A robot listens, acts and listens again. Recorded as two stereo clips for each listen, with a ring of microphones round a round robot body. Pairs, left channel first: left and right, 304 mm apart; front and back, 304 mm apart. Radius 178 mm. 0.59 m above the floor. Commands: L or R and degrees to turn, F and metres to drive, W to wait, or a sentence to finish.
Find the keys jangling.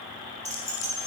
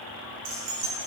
R160
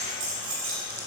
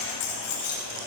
R40
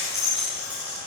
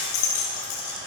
Found it: keys jangling, straight ahead, 2 to 4 m away.